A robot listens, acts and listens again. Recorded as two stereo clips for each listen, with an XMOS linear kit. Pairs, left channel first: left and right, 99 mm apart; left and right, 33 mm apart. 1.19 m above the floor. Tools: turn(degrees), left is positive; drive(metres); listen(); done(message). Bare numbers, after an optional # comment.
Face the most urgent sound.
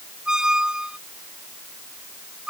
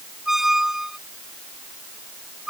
listen()
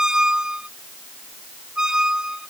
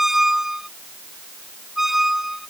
listen()
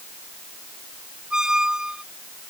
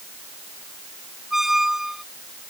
done("I can't make out anything urgent, only a squeak.")